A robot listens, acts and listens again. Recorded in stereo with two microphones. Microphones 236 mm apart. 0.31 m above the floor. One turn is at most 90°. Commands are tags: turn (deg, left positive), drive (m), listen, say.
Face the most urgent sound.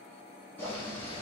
<listen/>
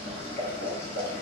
<listen/>
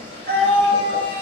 <turn deg="-45"/>
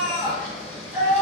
<say>Facing the scream, 1 to 2 m away.</say>